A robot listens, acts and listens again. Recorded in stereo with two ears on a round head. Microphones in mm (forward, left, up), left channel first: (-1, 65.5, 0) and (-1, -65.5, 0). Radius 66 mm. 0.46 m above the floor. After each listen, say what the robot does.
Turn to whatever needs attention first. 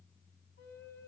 Keep listening.
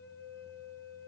Keep listening.
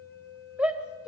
Turn 30° right.
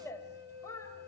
Turn 20° left.
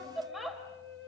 Facing the shout, 1 to 2 m away.